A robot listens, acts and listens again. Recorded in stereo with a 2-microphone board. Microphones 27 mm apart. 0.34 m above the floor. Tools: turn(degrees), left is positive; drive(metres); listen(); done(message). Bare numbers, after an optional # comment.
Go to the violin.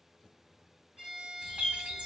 # The violin: about 45° right or 135° right.
turn(-45)
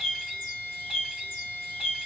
# So it is at 85° right.
turn(-85)
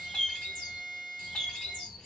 # The violin is now 15° right.
turn(-15)
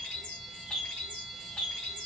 listen()
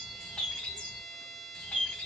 drive(1.0)
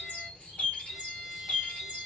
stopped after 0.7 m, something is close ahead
done("I am next to the violin.")